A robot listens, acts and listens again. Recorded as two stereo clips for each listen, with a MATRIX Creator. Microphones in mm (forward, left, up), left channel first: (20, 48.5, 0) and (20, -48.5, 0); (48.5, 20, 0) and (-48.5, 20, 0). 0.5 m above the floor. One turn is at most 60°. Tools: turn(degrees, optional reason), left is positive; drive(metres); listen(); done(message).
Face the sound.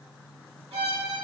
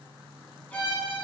turn(degrees=-60, reason="The violin: 75° right.")
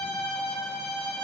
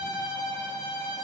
turn(degrees=-10, reason="The violin is now 10° right.")
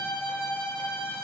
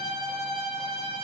done("Found it: a violin, straight ahead, 1 to 2 m away.")